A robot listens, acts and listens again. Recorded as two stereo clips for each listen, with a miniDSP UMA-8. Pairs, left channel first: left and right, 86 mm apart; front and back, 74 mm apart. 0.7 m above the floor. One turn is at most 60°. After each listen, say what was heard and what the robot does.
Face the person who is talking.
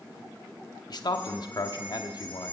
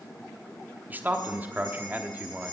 The man speaking: 120° left. Turn 60° left.
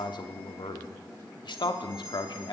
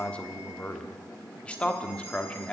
The man speaking is now 75° left. Turn 60° left.
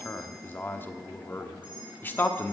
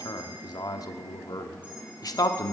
The man speaking is now 25° left. Turn 25° left.
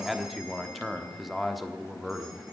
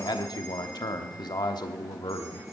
Facing the man speaking, 1 to 2 m away.